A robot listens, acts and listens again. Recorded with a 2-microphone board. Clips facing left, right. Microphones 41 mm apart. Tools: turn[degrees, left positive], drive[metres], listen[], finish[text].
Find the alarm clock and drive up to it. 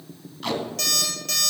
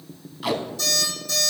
Thought: The alarm clock: about 75° left or 105° left.
Action: turn[75]
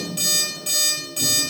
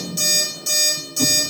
Thought: So it is at 30° left.
Action: turn[30]
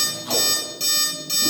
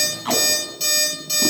Action: drive[1.0]
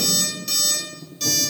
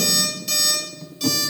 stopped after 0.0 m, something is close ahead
Action: finish[Something is in my way. I am facing the alarm clock but have not reached it.]